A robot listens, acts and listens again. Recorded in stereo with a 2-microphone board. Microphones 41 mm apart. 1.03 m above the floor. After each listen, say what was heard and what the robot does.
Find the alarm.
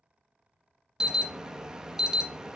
Turn 30° right.
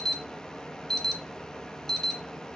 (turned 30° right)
So it is at 20° left. Turn 20° left.
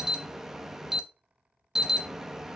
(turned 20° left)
The alarm is now 10° right. Turn 10° right.
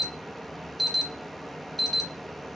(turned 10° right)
Facing the alarm.